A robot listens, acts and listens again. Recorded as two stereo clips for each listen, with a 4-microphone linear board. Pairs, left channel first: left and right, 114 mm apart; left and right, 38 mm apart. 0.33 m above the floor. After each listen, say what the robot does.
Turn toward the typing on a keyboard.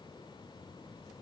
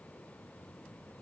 Keep listening.
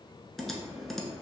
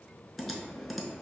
Turn 30° left.
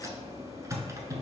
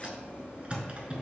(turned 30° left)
Turn 30° right.
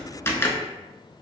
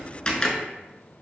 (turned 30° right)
Turn 20° left.
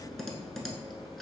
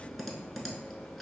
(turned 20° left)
Facing the typing on a keyboard, under 1 m away.